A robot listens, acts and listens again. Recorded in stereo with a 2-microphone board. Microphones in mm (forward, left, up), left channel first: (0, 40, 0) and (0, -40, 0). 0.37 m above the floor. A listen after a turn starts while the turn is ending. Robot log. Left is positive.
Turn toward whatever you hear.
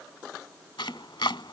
cmd yaw +90
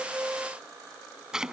note: So it is at 10° right.
cmd yaw -10
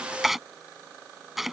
end: Found it: chopping, straight ahead.